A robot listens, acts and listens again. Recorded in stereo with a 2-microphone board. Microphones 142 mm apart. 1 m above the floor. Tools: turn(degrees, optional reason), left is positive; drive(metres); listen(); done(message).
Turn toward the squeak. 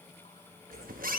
turn(degrees=-90)
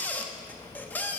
turn(degrees=10, reason="So it is at 10° left.")
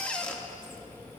turn(degrees=10, reason="The squeak is now 10° left.")
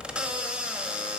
done("Found it: a squeak, straight ahead.")